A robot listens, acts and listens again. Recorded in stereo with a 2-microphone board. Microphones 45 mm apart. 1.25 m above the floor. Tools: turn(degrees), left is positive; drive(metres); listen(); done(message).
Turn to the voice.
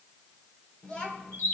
turn(degrees=20)
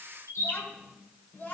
turn(degrees=140)
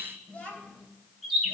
turn(degrees=30)
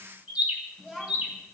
done("Found it: a child speaking, straight ahead.")